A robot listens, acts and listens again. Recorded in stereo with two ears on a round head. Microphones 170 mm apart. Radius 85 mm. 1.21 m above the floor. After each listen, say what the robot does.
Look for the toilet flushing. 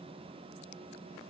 Keep listening.
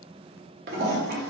Turn 50° right.
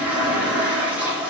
Turn 10° right.
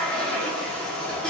Found it: a toilet flushing, straight ahead.